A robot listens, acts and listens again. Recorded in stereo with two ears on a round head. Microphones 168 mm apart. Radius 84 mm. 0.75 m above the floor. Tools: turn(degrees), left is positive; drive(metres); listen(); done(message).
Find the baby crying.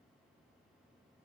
listen()
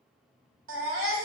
turn(degrees=-90)
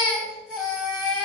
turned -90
done("Facing the baby crying.")